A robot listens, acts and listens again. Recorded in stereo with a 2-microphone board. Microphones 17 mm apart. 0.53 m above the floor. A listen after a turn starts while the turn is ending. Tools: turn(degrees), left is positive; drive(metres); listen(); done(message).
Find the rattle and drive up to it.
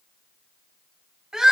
listen()
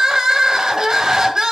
listen()
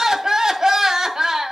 done("I can't make out a rattle to turn to.")